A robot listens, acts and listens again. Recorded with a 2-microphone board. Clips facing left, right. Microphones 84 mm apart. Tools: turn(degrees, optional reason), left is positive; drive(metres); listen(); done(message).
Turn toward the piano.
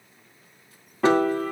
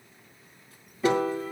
turn(degrees=90)
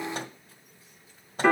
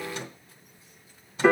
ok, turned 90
done("Facing the piano.")